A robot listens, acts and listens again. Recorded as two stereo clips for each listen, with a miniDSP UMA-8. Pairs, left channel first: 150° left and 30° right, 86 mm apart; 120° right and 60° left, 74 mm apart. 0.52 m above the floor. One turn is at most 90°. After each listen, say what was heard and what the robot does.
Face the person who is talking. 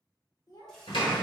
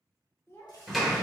The child speaking: 175° right. Turn 90° right.
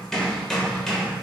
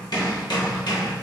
Nothing new. It was at 85° right. Turn 85° right.
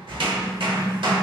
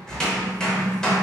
Keep listening.
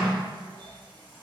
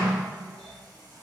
I heard a child speaking from this way, but can't make it out now.